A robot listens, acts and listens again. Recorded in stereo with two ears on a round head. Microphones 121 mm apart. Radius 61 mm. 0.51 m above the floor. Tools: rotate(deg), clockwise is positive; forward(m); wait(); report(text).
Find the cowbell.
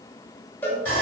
rotate(-30)
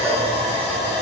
wait()
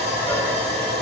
wait()
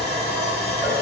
report("I heard a cowbell, but can't make it out now. It was about 15° right or 135° left.")